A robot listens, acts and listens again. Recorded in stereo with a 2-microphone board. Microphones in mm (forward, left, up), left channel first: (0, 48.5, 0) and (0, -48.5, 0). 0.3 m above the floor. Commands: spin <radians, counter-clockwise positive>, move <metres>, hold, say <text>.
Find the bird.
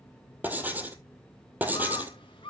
spin 1.05
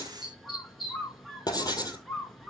say Facing the bird, 2 to 4 m away.